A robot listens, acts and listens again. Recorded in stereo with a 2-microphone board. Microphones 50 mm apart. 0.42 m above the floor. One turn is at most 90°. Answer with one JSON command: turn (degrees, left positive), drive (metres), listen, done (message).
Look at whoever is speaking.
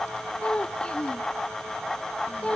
{"turn": 25}
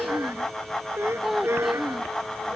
{"done": "Facing the child speaking."}